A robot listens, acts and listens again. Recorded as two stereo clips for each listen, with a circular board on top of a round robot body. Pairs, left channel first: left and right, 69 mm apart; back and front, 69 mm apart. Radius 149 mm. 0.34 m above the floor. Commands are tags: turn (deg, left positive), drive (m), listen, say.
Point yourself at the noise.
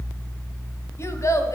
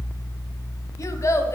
<turn deg="135"/>
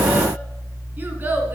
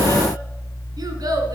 <turn deg="-30"/>
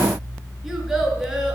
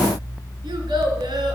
<say>Found it: a child speaking, straight ahead, 2 to 4 m away.</say>